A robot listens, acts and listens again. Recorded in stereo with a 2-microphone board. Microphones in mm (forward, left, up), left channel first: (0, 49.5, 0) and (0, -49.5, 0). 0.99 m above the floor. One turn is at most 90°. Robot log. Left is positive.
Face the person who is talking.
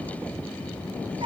cmd idle
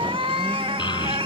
note: The child speaking: about 50° left or 130° left.
cmd yaw +50
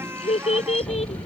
note: So it is at 85° left.
cmd yaw +85
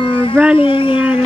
note: The child speaking is now 10° right.
cmd yaw -10
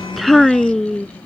end: Facing the child speaking.